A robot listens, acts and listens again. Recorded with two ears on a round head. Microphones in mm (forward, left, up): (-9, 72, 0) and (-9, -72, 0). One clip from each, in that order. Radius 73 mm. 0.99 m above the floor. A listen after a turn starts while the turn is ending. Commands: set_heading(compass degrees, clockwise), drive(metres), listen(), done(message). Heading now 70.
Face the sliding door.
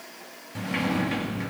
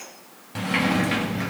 set_heading(95)
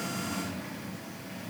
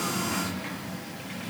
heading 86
set_heading(226)
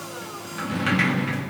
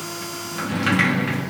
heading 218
done("Found it: a sliding door, straight ahead.")